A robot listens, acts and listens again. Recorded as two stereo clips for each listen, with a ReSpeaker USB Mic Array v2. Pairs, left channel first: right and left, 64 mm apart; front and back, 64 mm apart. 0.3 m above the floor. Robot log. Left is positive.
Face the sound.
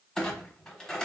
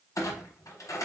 note: The clunk: 15° right.
cmd yaw -15
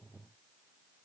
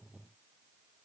end: I heard a clunk from this way, but can't make it out now.